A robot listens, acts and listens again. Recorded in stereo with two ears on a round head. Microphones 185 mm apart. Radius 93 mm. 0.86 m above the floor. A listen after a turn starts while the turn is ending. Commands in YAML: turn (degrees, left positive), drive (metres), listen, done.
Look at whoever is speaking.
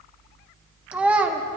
turn: -30
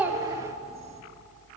listen: true
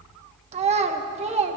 turn: -145
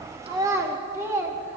turn: -15
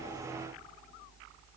listen: true
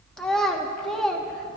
done: "Found it: a child speaking, straight ahead."